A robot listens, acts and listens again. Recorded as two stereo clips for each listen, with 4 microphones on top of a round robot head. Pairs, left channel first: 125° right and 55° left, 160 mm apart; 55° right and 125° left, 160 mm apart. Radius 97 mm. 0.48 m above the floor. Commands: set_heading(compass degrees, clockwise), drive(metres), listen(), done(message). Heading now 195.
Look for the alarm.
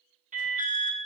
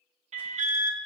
set_heading(110)
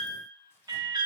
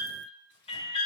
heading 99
done("Facing the alarm, 1 to 2 m away.")